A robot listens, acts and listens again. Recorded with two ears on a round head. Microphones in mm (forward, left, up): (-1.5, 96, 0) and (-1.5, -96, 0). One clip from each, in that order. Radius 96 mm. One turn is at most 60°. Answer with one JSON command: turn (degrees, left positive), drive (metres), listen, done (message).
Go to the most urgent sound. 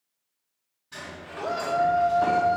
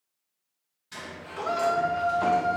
{"turn": -60}
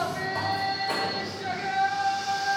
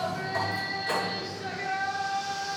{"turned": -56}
{"turn": -15}
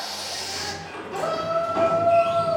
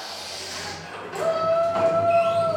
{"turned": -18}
{"drive": 1.0}
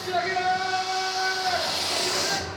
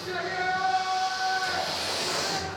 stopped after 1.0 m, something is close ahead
{"done": "I am next to the shout."}